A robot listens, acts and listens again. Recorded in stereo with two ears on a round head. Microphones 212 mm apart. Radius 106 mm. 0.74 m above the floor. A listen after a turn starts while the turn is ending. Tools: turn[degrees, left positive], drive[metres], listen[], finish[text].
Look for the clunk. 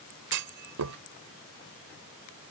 Action: turn[-90]
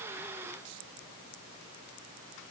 Action: finish[Facing where the clunk came from. I can't hear it now.]